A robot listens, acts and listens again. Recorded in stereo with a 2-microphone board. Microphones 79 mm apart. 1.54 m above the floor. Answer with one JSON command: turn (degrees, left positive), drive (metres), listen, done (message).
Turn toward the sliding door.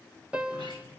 {"turn": -90}
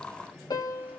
{"turn": -10}
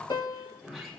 {"done": "Facing the sliding door."}